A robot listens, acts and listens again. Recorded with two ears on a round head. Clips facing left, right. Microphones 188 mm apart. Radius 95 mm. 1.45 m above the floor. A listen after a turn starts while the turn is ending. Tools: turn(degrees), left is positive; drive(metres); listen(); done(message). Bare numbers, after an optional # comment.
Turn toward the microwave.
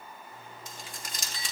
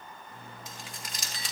# The microwave: about 55° right or 125° right.
turn(-55)
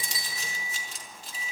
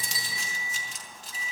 # So it is at 75° right.
turn(-75)
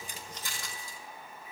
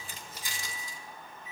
done("Facing the microwave, 2 to 4 m away.")